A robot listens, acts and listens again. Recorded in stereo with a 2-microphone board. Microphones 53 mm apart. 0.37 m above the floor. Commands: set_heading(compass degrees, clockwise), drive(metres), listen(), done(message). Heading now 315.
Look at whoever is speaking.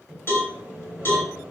listen()
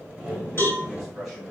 set_heading(285)
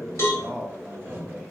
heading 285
set_heading(315)
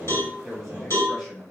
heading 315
done("Facing the man speaking, 1 to 2 m away.")